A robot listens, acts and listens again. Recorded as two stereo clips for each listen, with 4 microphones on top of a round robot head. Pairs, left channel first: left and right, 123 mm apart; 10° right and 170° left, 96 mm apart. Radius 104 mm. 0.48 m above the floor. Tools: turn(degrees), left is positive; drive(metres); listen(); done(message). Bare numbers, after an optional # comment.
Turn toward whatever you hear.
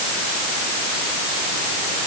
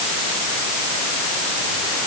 listen()
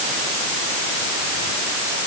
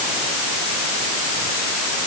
listen()
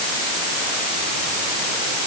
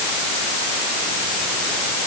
done("I can't make out anything.")